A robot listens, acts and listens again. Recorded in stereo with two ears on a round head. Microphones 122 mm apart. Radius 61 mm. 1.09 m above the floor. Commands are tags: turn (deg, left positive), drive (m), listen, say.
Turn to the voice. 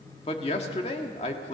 <turn deg="45"/>
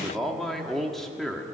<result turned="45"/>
<say>Found it: a man speaking, straight ahead, 1 to 2 m away.</say>